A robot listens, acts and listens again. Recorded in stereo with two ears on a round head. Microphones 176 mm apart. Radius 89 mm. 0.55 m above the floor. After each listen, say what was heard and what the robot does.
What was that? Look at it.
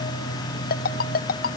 The ringtone: about 45° left or 135° left. Turn 45° left.
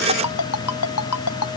So it is at 85° left. Turn 85° left.
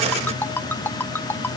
The ringtone is now 10° left. Turn 10° left.
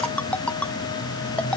Facing the ringtone.